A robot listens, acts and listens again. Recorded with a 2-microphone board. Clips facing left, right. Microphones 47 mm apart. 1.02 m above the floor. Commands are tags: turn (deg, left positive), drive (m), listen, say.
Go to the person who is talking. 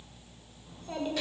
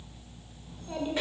<turn deg="30"/>
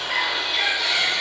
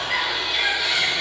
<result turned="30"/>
<listen/>
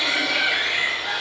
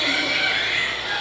<listen/>
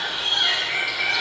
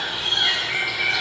<say>I heard a child speaking, but can't make it out now. It was about 25° right or 145° left. I did not reach it.</say>